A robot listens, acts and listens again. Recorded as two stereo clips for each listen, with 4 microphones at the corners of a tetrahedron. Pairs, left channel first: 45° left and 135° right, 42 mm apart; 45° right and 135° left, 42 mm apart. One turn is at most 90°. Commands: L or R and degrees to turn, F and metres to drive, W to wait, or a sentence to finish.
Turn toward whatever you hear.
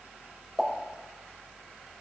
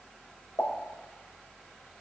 R30
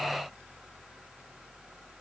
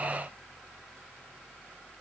Facing where the pop came from. I can't hear it now.